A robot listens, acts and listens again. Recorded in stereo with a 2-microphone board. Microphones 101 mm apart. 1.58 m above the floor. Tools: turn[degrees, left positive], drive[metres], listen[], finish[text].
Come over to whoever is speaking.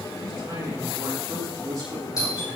Thought: The man speaking: about 35° right or 145° right.
Action: turn[-35]
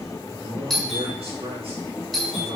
Thought: So it is at 110° right.
Action: turn[-110]
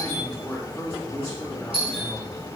Thought: The man speaking is now 10° left.
Action: turn[10]
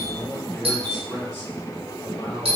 Action: drive[1.0]
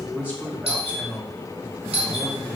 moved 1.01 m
Thought: The man speaking is now 15° right.
Action: turn[-15]
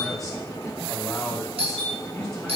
Action: drive[1.0]
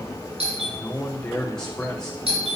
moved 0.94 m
Action: drive[1.0]
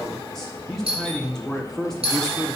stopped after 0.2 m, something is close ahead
Action: finish[I am next to the man speaking.]